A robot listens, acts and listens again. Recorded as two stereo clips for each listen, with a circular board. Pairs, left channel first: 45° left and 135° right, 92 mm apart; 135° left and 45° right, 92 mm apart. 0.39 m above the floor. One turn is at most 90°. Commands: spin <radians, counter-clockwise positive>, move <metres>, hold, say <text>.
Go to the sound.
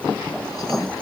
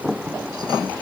hold
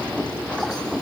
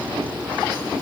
hold
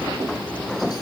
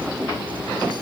say I can't make out anything.